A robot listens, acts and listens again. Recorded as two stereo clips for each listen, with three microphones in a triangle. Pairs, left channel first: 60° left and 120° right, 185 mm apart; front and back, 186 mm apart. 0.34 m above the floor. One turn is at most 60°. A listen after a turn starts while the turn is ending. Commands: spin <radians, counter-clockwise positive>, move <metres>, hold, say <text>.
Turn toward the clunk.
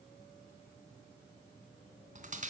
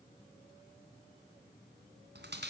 hold
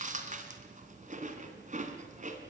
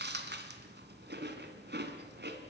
hold
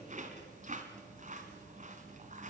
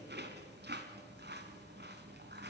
say I can't make out a clunk, only chewing.